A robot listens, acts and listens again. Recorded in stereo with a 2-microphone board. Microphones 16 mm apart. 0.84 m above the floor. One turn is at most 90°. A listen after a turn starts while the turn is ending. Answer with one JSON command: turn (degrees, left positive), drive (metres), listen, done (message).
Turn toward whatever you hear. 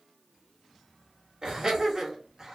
{"turn": -40}
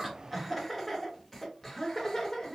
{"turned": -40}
{"turn": 30}
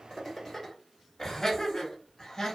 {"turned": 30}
{"turn": 35}
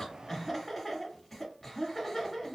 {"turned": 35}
{"done": "Found it: laughter, straight ahead."}